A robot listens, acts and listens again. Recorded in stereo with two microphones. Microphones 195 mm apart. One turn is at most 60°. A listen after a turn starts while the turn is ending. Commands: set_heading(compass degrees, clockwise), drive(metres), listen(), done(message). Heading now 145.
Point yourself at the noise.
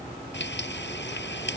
set_heading(85)
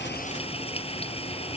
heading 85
set_heading(50)
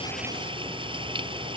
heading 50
set_heading(80)
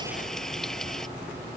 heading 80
done("Found it: frying, straight ahead.")